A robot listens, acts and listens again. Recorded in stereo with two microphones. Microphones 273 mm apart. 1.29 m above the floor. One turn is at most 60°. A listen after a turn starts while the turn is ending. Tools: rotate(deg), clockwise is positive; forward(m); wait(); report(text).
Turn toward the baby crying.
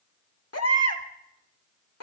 rotate(-60)
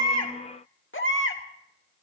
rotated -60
rotate(-50)
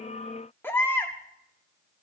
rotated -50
rotate(-10)
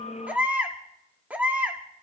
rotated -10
report("Facing the baby crying, 1 to 2 m away.")